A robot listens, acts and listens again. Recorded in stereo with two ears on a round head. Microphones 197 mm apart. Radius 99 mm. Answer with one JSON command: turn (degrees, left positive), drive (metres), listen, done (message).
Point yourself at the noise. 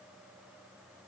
{"listen": true}
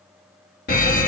{"turn": 45}
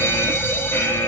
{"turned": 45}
{"turn": 15}
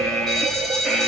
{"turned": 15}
{"done": "Found it: a fire alarm, straight ahead."}